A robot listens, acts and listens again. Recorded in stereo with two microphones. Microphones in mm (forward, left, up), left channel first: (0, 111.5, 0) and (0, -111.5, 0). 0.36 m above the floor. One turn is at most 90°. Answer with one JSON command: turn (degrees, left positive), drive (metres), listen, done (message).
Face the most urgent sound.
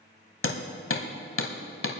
{"listen": true}
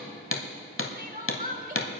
{"turn": -40}
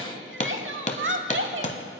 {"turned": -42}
{"turn": -90}
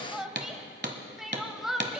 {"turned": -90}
{"done": "Facing the crying."}